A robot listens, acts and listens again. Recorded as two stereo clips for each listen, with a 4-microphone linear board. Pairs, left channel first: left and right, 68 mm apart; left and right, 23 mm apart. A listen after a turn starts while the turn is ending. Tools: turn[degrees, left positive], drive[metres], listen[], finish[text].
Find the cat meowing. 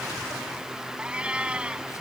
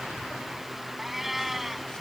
Action: turn[-30]
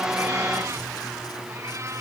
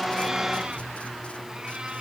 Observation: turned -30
Action: listen[]
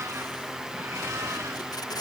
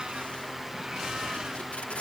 Action: listen[]
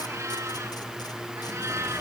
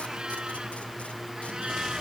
Action: finish[I heard a cat meowing, but can't make it out now. It was about 15° left or 135° right.]